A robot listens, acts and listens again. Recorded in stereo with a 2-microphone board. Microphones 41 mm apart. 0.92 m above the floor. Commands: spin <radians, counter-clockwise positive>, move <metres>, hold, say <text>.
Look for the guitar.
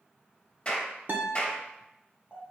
spin -0.96
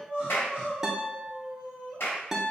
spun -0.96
spin -0.17
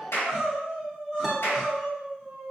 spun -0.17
hold
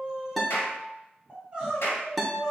say Facing the guitar.